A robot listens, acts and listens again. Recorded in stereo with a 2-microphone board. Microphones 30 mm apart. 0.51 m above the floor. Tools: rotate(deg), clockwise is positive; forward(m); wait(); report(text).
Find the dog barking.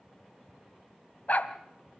rotate(-55)
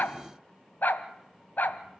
rotate(-70)
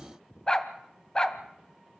rotate(-20)
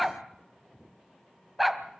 report("Found it: a dog barking, straight ahead, 1 to 2 m away.")